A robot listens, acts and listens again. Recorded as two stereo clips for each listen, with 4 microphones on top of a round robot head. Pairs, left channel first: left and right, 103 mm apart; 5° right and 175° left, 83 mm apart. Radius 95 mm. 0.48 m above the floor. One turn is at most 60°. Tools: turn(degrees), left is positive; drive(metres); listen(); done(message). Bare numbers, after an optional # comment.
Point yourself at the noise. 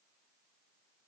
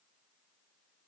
listen()
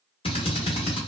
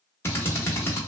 # The drill: 55° left.
turn(55)
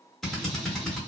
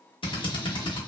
done("Found it: a drill, straight ahead.")